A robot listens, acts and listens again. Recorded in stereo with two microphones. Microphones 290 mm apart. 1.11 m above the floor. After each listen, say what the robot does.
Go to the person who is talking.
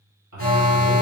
Turn 90° right.
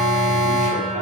Keep listening.
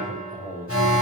Drive 1.0 m forward.
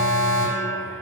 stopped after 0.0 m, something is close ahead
Keep listening.
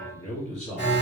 Blocked. The man speaking is further on, straight ahead.